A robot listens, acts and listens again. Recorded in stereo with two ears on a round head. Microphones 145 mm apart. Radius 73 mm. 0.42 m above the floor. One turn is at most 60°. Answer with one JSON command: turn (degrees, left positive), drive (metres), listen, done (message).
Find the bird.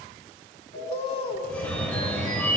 {"turn": 35}
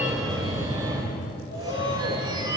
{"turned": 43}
{"listen": true}
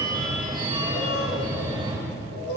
{"turn": 60}
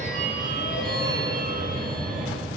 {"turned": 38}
{"turn": 60}
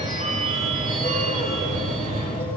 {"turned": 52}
{"turn": 10}
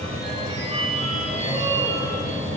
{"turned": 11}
{"done": "I heard a bird from this way, but can't make it out now."}